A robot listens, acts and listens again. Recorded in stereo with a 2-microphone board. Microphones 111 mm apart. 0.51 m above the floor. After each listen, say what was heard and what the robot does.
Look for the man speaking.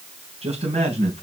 Turn 90° right.
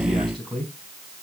Facing the man speaking, 2 to 4 m away.